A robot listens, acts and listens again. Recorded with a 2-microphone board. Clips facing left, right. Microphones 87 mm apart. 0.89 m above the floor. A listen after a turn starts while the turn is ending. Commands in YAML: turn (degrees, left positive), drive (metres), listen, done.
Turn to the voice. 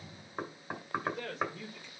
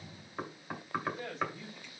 turn: 70
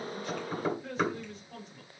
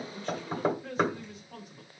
turn: -10
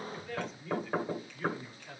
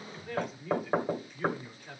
turn: -15
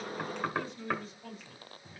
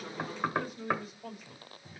turn: -10
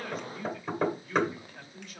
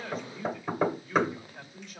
done: "Found it: a man speaking, straight ahead, 2 to 4 m away."